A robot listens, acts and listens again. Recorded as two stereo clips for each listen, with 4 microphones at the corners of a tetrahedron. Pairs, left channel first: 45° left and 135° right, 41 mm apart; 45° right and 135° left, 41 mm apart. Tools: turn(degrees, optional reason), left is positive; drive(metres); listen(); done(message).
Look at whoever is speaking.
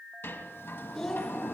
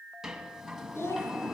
turn(degrees=-35, reason="The child speaking: 35° right.")
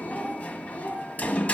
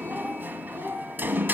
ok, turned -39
done("Facing the child speaking.")